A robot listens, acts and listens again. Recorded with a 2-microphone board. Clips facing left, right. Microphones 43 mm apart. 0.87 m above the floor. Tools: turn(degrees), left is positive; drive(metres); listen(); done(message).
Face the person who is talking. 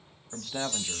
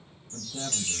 turn(degrees=65)
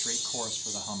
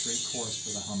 turn(degrees=30)
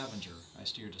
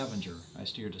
turn(degrees=-10)
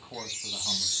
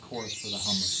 done("Found it: a man speaking, straight ahead.")